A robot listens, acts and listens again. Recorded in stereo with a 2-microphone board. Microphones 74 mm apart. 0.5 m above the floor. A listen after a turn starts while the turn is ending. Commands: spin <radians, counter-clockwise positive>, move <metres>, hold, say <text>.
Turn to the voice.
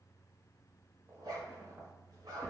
hold
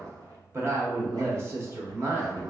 spin -0.70
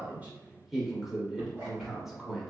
spin -0.17
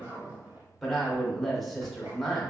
say Facing the woman speaking.